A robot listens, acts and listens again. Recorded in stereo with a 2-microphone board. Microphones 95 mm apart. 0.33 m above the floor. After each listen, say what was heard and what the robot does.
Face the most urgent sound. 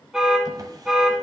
Turn 30° right.
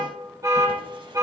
So it is at 145° right. Turn 145° right.
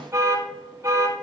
The alarm is now 30° right. Turn 30° right.
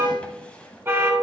The alarm is now 25° right. Turn 25° right.
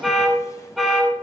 Facing the alarm.